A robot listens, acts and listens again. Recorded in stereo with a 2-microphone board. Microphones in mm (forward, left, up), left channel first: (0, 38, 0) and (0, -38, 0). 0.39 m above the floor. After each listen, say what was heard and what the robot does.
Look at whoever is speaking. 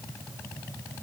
Keep listening.
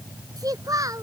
The child speaking: about 50° right or 130° right. Turn 50° right.
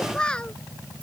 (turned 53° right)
So it is at 15° left. Turn 15° left.
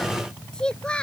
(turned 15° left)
The child speaking is now 15° left. Turn 15° left.
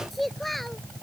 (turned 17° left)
Facing the child speaking.